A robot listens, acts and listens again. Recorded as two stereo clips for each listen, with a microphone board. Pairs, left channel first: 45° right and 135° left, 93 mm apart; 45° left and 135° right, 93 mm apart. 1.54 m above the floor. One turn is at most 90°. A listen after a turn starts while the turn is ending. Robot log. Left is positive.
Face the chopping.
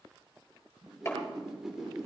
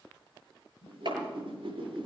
note: The chopping: 105° right.
cmd yaw -90
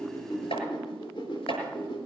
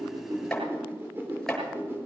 note: The chopping is now 40° right.
cmd yaw -40
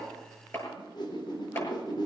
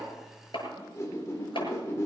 note: The chopping is now 20° left.
cmd yaw +20
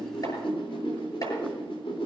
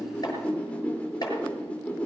cmd idle
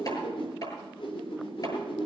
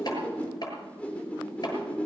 end: Facing the chopping, over 4 m away.